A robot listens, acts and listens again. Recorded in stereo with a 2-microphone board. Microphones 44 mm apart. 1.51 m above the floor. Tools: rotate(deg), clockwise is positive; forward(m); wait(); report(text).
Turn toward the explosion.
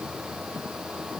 wait()
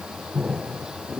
rotate(30)
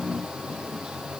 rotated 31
wait()
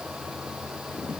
report("I heard an explosion, but can't make it out now. It was about straight ahead or 115° right.")